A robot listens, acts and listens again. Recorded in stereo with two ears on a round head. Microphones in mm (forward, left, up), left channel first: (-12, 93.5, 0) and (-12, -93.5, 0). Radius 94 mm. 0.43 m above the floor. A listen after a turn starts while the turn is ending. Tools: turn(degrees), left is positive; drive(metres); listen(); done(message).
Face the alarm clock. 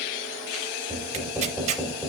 listen()
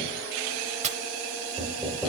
listen()
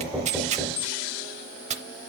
done("I can't make out an alarm clock to turn to.")